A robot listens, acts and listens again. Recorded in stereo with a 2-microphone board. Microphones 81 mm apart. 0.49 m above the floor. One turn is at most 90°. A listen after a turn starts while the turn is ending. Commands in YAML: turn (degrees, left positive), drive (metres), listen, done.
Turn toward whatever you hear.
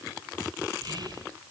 turn: -60
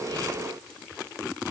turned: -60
listen: true
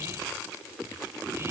listen: true
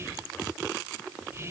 turn: -40
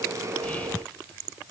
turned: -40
listen: true
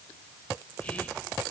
listen: true
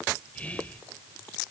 turn: 20
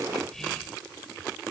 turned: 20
done: "Facing the whispering, 1 to 2 m away."